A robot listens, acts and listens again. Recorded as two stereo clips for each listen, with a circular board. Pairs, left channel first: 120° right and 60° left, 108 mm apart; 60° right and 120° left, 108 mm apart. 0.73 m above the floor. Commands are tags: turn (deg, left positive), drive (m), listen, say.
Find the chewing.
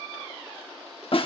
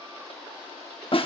<listen/>
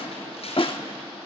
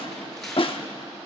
<listen/>
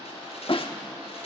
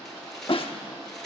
<say>I can't make out chewing, only tearing paper and a snare drum.</say>